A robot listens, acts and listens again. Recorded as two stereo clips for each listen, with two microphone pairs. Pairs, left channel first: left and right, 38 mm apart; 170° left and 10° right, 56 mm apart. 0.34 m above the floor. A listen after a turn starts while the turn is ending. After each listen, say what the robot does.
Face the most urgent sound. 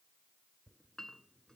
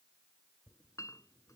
Keep listening.
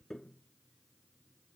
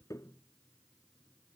Keep listening.
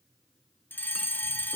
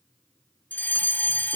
Turn 115° left.
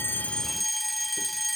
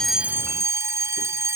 Found it: a fire alarm, straight ahead.